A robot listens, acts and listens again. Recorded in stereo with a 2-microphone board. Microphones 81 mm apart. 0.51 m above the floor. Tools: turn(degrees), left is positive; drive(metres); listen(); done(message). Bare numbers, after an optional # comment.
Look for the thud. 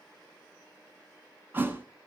# The thud: about 25° right or 155° right.
turn(-25)
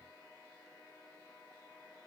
listen()
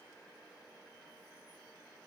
done("I heard a thud, but can't make it out now. It was about straight ahead or 130° right.")